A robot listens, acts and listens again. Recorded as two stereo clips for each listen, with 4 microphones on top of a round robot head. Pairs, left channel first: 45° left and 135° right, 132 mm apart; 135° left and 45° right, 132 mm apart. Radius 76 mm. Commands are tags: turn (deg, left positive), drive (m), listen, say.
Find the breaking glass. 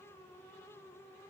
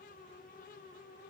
<listen/>
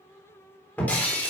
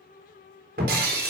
<turn deg="-35"/>
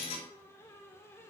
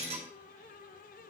<say>Found it: breaking glass, straight ahead, 2 to 4 m away.</say>